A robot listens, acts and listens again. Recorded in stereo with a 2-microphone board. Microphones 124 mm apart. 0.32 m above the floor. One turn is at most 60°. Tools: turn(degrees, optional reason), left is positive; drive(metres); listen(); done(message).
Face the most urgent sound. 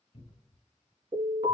turn(degrees=-60, reason="The alarm: about 75° right or 105° right.")
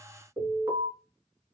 turn(degrees=-35, reason="So it is at 35° right.")
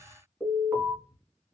turn(degrees=-15, reason="The alarm is now 15° right.")
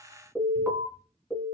done("Found it: an alarm, straight ahead, 1 to 2 m away.")